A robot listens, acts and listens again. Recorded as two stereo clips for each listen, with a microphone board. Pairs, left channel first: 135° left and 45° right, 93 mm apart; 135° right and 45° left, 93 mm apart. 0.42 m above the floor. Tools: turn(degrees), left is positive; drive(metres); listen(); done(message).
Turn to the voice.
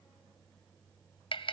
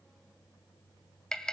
listen()
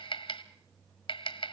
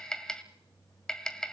listen()
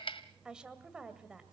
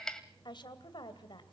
turn(degrees=-125)
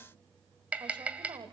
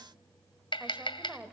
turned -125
turn(degrees=-30)
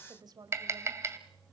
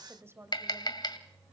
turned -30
turn(degrees=-10)
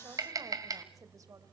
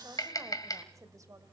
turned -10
done("Found it: a woman speaking, straight ahead.")